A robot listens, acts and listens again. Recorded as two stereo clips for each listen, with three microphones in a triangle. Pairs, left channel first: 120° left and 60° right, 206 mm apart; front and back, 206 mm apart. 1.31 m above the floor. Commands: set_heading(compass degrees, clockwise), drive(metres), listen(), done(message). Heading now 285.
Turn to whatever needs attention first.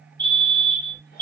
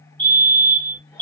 set_heading(320)
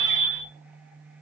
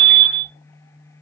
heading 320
done("Found it: a fire alarm, straight ahead, 1 to 2 m away.")